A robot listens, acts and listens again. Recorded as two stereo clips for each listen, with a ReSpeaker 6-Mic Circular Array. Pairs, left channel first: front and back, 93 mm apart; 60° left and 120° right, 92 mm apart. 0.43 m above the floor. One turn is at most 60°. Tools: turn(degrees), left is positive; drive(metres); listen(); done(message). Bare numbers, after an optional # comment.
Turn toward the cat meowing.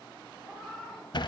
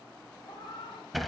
# The cat meowing: 80° left.
turn(60)
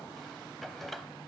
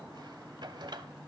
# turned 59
# Nothing new. It was at 20° left.
turn(20)
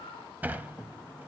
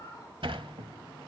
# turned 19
done("Found it: a cat meowing, straight ahead, over 4 m away.")